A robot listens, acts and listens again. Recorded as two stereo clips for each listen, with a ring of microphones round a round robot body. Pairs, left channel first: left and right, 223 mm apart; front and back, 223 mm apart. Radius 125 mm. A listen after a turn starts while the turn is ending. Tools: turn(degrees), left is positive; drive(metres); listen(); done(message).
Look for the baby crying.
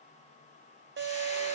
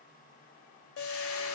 listen()
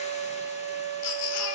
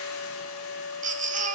turn(degrees=120)
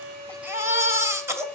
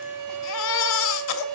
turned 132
turn(degrees=-10)
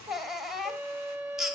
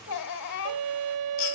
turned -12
done("Found it: a baby crying, straight ahead.")